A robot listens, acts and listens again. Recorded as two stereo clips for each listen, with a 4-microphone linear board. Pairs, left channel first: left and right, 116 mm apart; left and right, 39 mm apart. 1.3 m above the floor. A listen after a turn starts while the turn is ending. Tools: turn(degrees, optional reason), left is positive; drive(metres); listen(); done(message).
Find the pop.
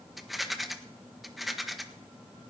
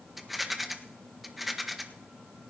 listen()
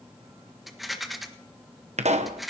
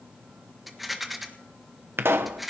turn(degrees=-75, reason="The pop: about 75° right or 105° right.")
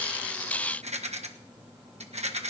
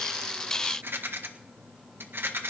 listen()
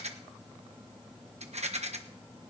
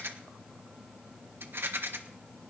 done("I heard a pop, but can't make it out now. It was about straight ahead or 30° right.")